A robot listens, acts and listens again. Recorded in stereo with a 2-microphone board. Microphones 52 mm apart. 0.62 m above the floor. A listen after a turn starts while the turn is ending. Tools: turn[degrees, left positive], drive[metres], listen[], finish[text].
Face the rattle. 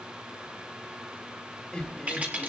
Thought: The rattle: about 35° right or 145° right.
Action: turn[-35]
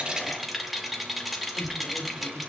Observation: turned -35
Action: finish[Found it: a rattle, straight ahead, 2 to 4 m away.]